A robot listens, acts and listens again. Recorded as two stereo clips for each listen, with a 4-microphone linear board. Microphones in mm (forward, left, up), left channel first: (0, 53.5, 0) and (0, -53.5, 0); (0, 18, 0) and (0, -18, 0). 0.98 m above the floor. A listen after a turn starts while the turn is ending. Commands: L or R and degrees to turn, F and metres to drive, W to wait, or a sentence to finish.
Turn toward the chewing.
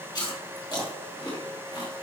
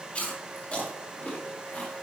L40
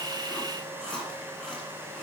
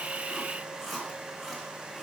Found it: chewing, straight ahead, 2 to 4 m away.